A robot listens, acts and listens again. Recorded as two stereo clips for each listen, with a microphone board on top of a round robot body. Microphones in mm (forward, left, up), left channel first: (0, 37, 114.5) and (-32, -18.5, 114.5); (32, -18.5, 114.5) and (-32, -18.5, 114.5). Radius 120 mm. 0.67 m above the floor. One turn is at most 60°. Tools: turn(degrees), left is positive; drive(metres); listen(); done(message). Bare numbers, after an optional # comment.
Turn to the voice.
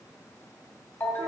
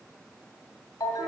listen()
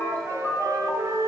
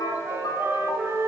listen()
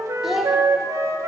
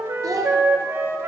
# The child speaking: 155° left.
turn(60)
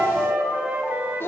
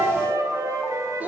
# The child speaking is now 115° left.
turn(60)
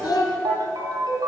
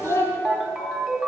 # The child speaking is now 50° left.
turn(50)
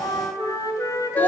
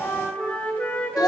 listen()
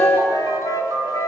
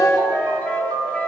listen()
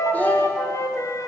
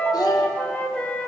done("I heard a child speaking from this way, but can't make it out now.")